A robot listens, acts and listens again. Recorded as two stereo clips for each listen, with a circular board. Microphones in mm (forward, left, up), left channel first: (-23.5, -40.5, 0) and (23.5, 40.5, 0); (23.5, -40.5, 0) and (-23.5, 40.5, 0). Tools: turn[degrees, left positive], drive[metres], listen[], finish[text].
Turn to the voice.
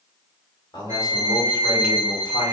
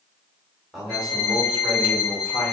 Thought: The man speaking: 150° right.
Action: turn[-150]
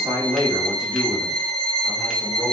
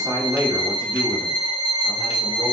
Thought: The man speaking is now 95° left.
Action: turn[95]
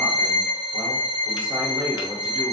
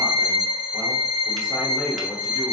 Action: finish[Facing the man speaking, 1 to 2 m away.]